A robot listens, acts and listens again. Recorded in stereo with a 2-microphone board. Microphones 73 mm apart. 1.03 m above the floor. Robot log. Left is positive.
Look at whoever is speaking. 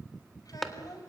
note: The child speaking: about 60° left or 120° left.
cmd yaw +60
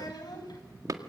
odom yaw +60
note: So it is at 65° left.
cmd yaw +65
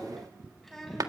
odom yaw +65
end: Facing the child speaking.